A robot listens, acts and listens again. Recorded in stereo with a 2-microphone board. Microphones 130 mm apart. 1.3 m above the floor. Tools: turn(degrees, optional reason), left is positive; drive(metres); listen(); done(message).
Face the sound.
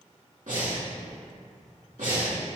turn(degrees=-90)
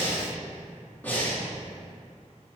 turn(degrees=15, reason="So it is at 15° left.")
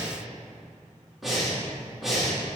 done("Facing the breathing, 2 to 4 m away.")